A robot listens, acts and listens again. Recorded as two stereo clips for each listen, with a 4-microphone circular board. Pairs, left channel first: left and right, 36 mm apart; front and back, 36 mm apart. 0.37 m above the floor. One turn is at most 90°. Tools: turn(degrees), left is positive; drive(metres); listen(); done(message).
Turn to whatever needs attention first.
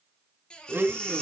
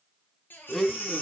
turn(degrees=25)
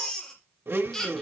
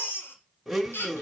turn(degrees=10)
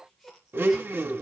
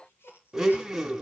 listen()
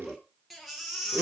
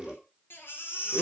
done("Found it: a baby crying, straight ahead.")